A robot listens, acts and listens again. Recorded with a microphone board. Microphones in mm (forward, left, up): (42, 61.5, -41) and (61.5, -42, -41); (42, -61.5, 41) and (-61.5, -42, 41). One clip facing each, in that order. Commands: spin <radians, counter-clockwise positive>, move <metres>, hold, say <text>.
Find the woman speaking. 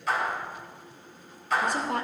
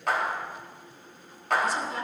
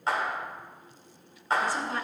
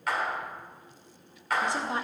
spin 1.83
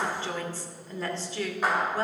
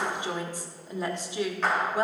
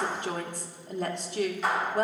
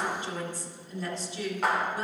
spin -0.17
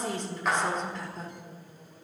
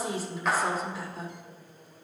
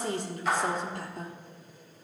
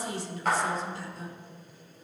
say Found it: a woman speaking, straight ahead, 1 to 2 m away.